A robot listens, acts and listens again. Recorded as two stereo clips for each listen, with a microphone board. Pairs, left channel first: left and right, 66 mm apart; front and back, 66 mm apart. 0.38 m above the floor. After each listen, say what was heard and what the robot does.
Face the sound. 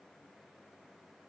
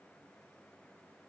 Keep listening.
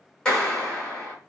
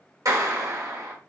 The clap: 165° left. Turn 165° left.
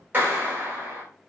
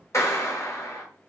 The clap is now 35° right. Turn 35° right.
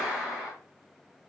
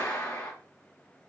The clap is now 15° right. Turn 15° right.
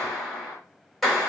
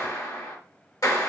Found it: a clap, straight ahead, 1 to 2 m away.